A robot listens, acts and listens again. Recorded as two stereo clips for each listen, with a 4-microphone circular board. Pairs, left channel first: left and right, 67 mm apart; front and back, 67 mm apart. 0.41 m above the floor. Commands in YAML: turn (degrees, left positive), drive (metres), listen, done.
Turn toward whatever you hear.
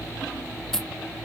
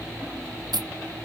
turn: 175
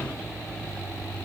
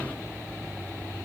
done: "Facing where the dropped coin came from. I can't hear it now."